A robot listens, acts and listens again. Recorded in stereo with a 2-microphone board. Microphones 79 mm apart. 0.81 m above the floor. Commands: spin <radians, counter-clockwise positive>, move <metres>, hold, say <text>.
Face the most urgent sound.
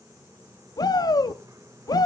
spin 0.96
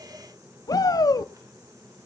spin 1.05
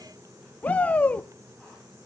spin 0.35
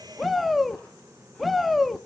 say Found it: a shout, straight ahead.